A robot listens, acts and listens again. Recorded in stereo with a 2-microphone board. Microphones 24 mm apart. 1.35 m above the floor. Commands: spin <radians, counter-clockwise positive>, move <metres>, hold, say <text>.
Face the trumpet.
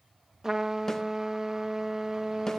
spin -0.44
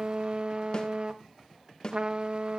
spin -2.27
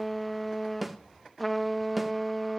say Facing the trumpet, 1 to 2 m away.